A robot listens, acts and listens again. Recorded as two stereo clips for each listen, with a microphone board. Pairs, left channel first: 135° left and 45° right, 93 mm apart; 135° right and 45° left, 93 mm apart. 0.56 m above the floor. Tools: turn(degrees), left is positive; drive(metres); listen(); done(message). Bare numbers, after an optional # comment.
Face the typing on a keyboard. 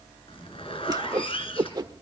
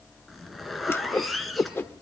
listen()
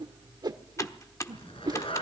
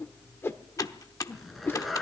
# The typing on a keyboard: straight behind.
turn(180)
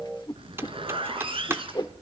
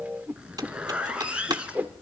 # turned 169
# The typing on a keyboard is now 15° left.
turn(15)
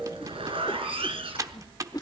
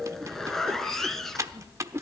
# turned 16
done("Facing the typing on a keyboard.")